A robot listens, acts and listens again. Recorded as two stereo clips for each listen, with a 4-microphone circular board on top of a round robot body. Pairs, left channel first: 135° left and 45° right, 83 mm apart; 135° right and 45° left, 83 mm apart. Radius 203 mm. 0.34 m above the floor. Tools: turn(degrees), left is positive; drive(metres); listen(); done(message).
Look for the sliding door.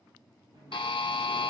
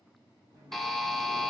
done("Found it: a sliding door, straight ahead.")